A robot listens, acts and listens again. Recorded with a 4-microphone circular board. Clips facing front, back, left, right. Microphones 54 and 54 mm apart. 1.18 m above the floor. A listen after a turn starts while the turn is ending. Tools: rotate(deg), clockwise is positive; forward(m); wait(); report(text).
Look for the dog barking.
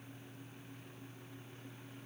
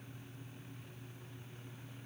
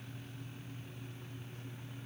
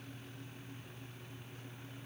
wait()
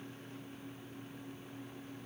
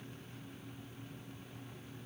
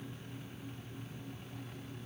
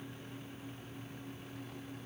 wait()
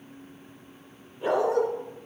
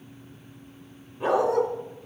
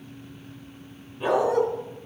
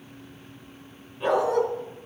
rotate(-175)
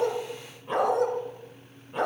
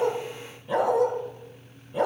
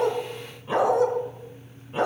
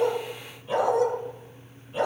rotate(-30)
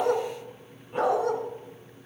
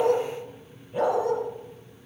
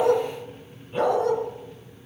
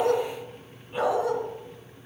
rotate(10)
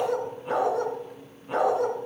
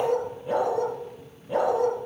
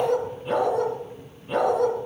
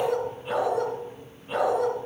report("Found it: a dog barking, straight ahead.")